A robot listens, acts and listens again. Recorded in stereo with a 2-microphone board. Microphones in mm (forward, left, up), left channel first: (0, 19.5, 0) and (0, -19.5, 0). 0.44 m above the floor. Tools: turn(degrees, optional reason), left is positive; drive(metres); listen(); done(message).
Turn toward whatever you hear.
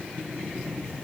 listen()
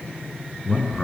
turn(degrees=25, reason="The man speaking: about 25° left or 155° left.")
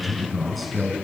done("Facing the man speaking.")